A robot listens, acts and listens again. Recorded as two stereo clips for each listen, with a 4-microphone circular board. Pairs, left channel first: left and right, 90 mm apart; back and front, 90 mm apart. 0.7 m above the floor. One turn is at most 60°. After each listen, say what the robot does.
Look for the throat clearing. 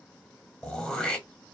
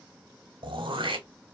Turn 10° left.
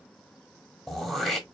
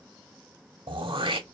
Facing the throat clearing.